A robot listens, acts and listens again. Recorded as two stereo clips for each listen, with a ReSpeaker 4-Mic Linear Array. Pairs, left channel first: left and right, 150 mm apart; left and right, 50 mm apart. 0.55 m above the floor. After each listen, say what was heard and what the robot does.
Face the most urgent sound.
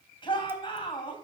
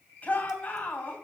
The shout: about 35° left or 145° left. Turn 35° left.
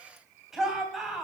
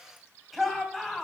Facing the shout, 2 to 4 m away.